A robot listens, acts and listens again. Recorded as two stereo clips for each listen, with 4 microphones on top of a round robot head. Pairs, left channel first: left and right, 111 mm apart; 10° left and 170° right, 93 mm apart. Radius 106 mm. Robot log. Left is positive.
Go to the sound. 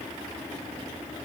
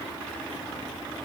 cmd idle
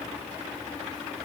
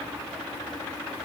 cmd idle
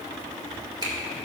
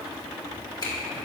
note: The finger snap: 35° right.
cmd yaw -35
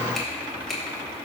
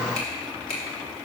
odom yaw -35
cmd fwd 1.0
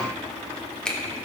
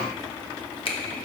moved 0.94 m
note: The finger snap is now 10° left.
cmd yaw +10
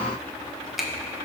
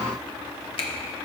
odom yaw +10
cmd fwd 1.0
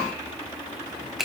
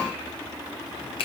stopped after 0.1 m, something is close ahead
end: Arrived at the finger snap, straight ahead.